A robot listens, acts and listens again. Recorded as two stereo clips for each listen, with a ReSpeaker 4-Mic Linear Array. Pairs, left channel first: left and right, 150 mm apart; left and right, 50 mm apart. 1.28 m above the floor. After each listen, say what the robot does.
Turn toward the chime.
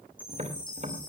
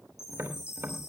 Turn 65° left.
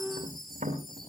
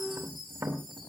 Found it: a chime, straight ahead, over 4 m away.